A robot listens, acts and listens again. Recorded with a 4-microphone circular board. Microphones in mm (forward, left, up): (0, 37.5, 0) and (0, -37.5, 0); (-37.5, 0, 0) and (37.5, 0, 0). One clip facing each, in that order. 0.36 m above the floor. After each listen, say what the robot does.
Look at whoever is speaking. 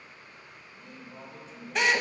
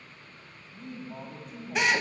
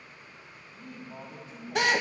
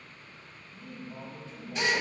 Turn 110° right.
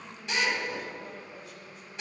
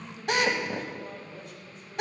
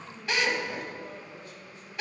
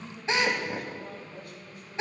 Found it: a man speaking, straight ahead, 1 to 2 m away.